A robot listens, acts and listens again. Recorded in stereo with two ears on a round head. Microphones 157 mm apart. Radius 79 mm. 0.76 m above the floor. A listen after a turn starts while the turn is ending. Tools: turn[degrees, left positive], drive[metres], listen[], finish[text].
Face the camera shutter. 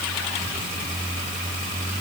Action: listen[]
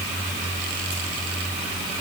Action: listen[]
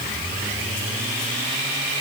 Action: finish[I can't make out a camera shutter to turn to.]